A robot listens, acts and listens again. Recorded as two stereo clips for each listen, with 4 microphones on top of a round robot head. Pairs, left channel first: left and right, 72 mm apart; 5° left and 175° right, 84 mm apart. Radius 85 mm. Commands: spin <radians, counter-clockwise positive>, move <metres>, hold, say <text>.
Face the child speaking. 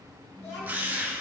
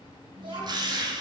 spin 2.71
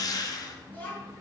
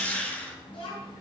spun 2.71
spin 0.44
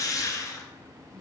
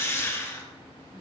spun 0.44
spin 0.17
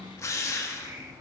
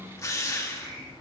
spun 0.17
say Found it: a child speaking, straight ahead, over 4 m away.